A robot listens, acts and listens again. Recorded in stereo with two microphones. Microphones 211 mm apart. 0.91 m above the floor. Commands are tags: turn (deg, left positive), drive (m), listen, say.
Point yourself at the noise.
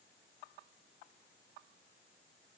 <listen/>
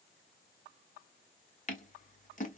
<turn deg="40"/>
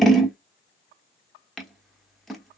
<say>Found it: scissors, straight ahead, 1 to 2 m away.</say>